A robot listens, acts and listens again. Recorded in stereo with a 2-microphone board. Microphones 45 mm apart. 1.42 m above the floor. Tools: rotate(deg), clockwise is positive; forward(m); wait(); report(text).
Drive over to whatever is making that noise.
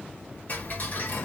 rotate(-45)
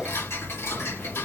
rotate(-90)
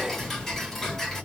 forward(1.0)
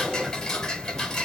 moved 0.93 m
rotate(-15)
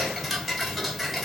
forward(1.0)
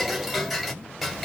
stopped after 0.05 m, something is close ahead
report("Arrived at the ticking, straight ahead.")